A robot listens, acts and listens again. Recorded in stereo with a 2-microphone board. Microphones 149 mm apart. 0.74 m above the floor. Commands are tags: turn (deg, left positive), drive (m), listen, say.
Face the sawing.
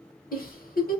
<listen/>
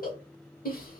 <listen/>
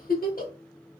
<say>I can't make out sawing to turn to.</say>